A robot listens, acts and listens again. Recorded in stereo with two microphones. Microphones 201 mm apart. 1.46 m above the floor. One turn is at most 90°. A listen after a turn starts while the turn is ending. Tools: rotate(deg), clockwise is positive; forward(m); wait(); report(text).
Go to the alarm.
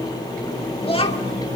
wait()
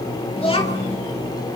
wait()
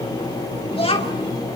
report("I can't make out an alarm to turn to.")